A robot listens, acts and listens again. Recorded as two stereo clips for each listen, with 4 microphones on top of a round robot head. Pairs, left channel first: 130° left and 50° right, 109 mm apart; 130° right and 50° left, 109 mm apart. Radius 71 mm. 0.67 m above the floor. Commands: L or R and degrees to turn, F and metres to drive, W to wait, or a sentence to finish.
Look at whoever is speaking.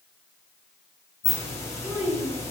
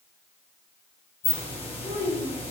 R135
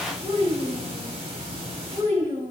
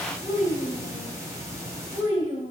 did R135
Found it: a child speaking, straight ahead.